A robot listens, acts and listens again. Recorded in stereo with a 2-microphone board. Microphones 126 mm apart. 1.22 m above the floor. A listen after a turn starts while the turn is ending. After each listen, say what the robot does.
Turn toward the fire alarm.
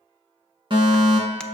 Turn 40° right.
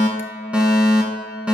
Turn 10° right.
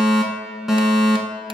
Facing the fire alarm, 1 to 2 m away.